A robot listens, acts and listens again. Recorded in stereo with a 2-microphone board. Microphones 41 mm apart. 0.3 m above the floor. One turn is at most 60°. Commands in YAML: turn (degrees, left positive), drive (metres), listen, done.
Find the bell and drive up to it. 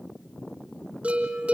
turn: -30
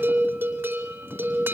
turn: -60
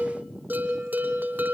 turn: -55
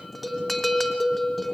drive: 1.0
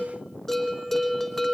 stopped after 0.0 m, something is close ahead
done: "Blocked. The bell is further on, straight ahead."